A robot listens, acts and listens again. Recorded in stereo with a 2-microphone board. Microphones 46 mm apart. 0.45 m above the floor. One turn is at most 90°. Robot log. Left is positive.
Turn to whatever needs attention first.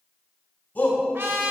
note: The shout: about 40° left or 140° left.
cmd yaw +40
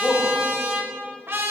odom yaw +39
end: Found it: a shout, straight ahead, 2 to 4 m away.